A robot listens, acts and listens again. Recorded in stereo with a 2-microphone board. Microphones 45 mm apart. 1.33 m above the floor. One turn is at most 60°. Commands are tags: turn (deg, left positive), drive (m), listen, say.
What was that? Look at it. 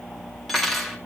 <turn deg="30"/>
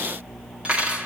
<turn deg="-30"/>
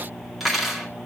<say>Facing the cutlery clinking.</say>